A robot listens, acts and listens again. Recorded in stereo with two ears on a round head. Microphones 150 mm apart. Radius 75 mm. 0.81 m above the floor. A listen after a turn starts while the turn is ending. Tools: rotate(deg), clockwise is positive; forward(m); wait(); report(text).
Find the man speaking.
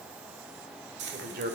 rotate(60)
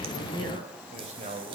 rotate(40)
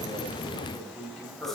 report("Facing the man speaking.")